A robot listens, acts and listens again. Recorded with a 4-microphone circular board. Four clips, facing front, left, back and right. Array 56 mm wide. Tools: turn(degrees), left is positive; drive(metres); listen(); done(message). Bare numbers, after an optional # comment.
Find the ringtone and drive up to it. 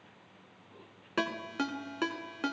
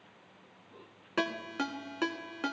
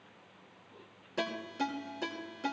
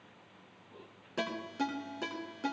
# The ringtone: 45° left.
turn(45)
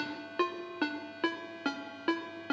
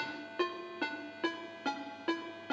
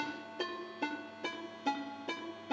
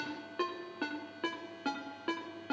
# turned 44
drive(1.0)
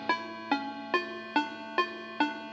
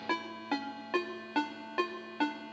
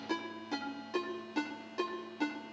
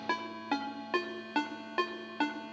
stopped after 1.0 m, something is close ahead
done("I am next to the ringtone.")